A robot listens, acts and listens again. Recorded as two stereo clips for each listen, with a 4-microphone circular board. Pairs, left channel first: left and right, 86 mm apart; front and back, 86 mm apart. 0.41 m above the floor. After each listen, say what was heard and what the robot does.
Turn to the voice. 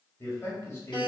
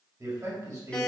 The man speaking: 145° left. Turn 145° left.
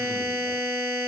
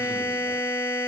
Keep listening.
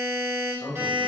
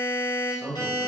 The man speaking is now 40° left. Turn 40° left.
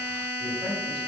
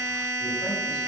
Keep listening.
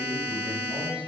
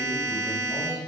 Keep listening.
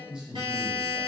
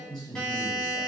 The man speaking is now 15° right. Turn 15° right.
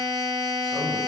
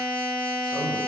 Keep listening.
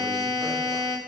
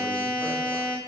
Keep listening.
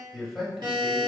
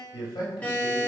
Facing the man speaking.